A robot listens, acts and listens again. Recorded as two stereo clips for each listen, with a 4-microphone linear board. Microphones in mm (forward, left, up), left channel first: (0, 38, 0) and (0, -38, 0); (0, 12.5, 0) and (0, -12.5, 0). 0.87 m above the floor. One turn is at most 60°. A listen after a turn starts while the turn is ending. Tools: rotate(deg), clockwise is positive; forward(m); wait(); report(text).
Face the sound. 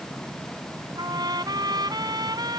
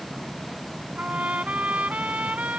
rotate(60)
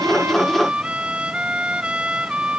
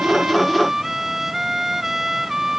rotate(15)
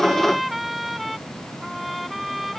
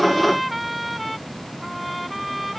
report("Found it: a trumpet, straight ahead.")